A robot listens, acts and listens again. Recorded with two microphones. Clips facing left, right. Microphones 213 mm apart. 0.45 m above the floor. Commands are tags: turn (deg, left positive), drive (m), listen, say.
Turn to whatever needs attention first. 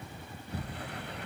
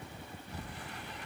<listen/>
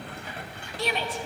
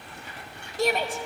<turn deg="-45"/>
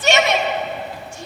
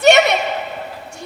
<turn deg="-75"/>
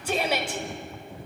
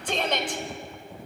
<turn deg="10"/>
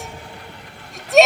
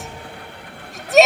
<say>Found it: a shout, straight ahead.</say>